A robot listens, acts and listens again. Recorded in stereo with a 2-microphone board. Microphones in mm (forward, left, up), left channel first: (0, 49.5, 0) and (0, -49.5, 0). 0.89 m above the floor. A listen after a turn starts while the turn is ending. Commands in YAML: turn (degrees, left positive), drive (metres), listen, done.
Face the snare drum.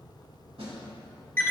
turn: -90
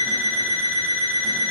listen: true
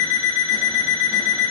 listen: true
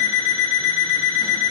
done: "Facing where the snare drum came from. I can't hear it now."